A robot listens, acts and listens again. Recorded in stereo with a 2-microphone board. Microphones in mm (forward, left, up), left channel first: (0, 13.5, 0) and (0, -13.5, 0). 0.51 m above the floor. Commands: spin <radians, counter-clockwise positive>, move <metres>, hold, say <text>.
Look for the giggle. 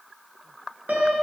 hold
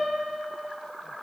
hold
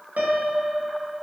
say I can't make out a giggle to turn to.